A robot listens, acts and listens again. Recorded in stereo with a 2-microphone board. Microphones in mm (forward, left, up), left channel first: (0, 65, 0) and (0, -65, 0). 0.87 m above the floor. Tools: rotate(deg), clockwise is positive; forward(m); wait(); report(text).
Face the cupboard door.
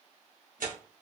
wait()
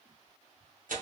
rotate(-45)
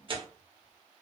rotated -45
wait()
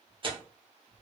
report("Found it: a cupboard door, straight ahead, 1 to 2 m away.")